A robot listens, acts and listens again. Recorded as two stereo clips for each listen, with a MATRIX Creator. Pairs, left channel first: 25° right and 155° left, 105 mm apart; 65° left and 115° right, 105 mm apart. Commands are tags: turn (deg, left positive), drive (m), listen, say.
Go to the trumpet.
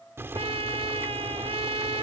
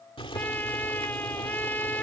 <turn deg="140"/>
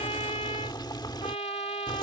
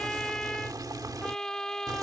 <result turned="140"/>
<turn deg="-15"/>
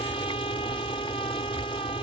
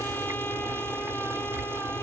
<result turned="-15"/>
<listen/>
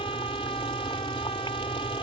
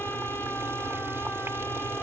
<listen/>
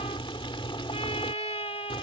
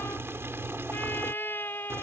<drive m="1.0"/>
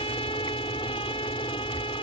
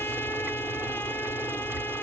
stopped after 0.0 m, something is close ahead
<say>Something is in my way. I am facing the trumpet but have not reached it.</say>